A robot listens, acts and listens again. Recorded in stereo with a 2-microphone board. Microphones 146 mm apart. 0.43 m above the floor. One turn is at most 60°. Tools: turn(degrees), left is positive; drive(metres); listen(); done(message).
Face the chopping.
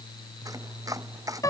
turn(degrees=-25)
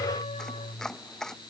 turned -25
done("Facing the chopping.")